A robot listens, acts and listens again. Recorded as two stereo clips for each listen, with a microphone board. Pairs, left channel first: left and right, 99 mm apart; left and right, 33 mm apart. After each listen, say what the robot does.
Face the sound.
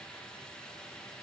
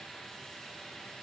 Keep listening.
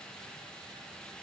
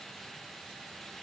Keep listening.
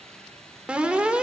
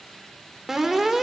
Turn 30° right.
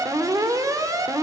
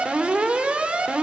Turn 135° right.
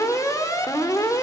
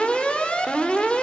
Turn 40° left.
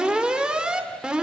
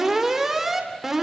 Turn 10° right.
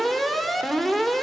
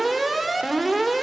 Facing the alarm.